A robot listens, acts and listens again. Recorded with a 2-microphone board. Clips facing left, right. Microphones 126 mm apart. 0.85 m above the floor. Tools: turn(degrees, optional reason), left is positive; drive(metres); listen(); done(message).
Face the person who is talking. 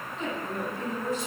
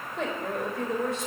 turn(degrees=-90)
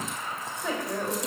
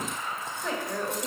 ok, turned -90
done("Facing the woman speaking, over 4 m away.")